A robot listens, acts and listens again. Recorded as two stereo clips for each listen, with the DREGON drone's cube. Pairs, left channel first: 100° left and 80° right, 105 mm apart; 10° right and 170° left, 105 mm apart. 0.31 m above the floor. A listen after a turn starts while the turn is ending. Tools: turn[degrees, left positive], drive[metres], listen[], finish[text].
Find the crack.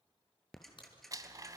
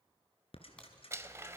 Thought: The crack: 70° left.
Action: turn[70]
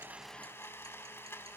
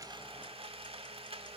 Action: finish[I heard a crack from this way, but can't make it out now.]